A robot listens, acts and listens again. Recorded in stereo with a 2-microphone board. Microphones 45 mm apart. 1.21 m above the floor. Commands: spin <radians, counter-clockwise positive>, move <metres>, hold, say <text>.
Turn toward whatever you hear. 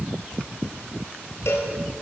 spin 1.22
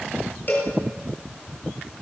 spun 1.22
spin 0.70
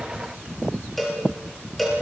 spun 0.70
say Found it: a cowbell, straight ahead.